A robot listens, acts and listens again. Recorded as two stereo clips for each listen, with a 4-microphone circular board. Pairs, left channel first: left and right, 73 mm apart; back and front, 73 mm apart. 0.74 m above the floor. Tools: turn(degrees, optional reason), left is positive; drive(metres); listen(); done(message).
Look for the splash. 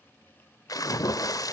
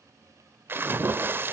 turn(degrees=60, reason="The splash: 60° left.")
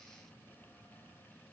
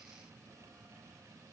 done("Facing where the splash came from. I can't hear it now.")